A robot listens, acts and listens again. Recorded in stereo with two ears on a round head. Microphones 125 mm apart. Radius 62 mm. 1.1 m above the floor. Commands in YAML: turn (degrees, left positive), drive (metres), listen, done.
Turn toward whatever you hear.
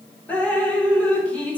turn: 30
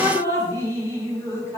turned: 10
turn: 155
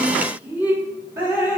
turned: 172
turn: -15
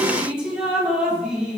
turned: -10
done: "Facing the dripping, 1 to 2 m away."